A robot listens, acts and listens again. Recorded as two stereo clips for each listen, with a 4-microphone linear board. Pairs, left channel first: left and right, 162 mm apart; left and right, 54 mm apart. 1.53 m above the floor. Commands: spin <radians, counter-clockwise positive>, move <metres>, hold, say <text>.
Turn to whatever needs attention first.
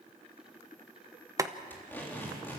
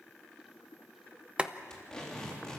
hold
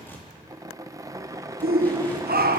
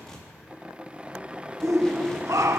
spin -1.22
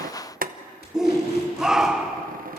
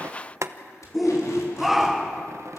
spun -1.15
say Found it: a shout, straight ahead, 1 to 2 m away.